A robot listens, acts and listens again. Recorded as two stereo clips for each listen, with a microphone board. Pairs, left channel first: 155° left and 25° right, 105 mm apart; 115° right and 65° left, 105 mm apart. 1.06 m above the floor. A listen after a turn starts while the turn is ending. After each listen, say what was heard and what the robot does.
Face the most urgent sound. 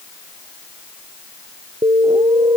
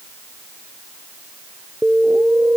Found it: an alarm, straight ahead.